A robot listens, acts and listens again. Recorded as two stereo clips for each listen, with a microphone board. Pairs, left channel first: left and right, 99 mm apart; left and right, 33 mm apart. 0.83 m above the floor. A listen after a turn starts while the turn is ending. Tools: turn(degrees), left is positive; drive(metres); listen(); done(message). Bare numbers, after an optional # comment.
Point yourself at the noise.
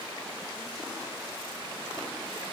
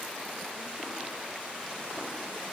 listen()
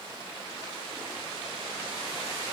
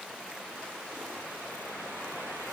listen()
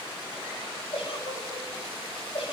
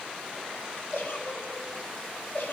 # The giggle: about 70° left or 110° left.
turn(70)
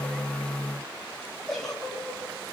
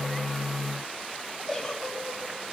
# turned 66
done("Facing the giggle, over 4 m away.")